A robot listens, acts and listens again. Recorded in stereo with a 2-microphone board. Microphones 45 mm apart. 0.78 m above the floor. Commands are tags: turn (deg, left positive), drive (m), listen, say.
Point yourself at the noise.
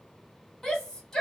<turn deg="30"/>
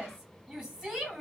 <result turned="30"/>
<turn deg="-15"/>
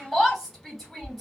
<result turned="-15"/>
<say>Found it: a shout, straight ahead.</say>